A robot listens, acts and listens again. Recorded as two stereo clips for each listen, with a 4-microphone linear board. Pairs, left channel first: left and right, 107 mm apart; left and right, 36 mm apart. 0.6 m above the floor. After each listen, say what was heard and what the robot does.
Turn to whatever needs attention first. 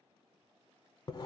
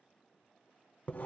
Keep listening.
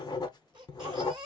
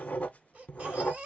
The baby crying: about 40° right or 140° right. Turn 40° right.
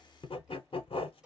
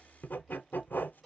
Keep listening.
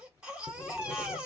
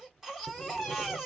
So it is at 10° right. Turn 10° right.
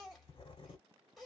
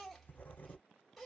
Found it: a baby crying, straight ahead, 1 to 2 m away.